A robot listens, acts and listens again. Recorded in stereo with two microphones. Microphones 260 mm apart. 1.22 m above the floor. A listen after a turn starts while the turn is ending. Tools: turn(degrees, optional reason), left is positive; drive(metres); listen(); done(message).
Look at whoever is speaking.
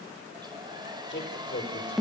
turn(degrees=45, reason="The man speaking: about 45° left or 135° left.")
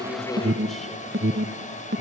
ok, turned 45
listen()
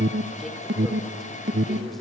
listen()
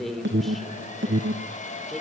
done("Found it: a man speaking, straight ahead.")